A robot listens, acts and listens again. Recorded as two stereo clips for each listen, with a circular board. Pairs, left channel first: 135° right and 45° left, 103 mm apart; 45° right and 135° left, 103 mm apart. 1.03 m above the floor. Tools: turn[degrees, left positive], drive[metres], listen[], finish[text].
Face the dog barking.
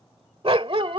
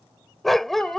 Thought: The dog barking: 40° left.
Action: turn[40]
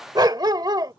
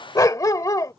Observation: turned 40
Action: finish[Facing the dog barking.]